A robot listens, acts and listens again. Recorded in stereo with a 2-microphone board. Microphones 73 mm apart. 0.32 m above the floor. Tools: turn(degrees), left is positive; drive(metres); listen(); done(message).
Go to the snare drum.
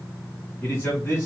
listen()
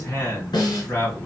turn(degrees=70)
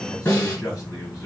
turn(degrees=35)
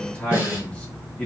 turn(degrees=-20)
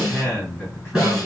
drive(metres=1.0)
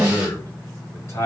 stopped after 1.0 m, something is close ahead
turn(degrees=-15)
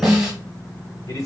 done("I am next to the snare drum.")